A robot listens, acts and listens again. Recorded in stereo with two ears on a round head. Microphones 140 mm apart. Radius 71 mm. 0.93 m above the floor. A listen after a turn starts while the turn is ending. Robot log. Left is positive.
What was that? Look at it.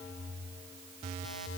cmd idle
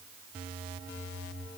cmd idle
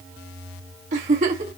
note: The giggle: about 45° right or 135° right.
cmd yaw -45
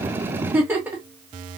note: So it is at 15° right.
cmd yaw -15
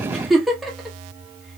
end: Facing the giggle.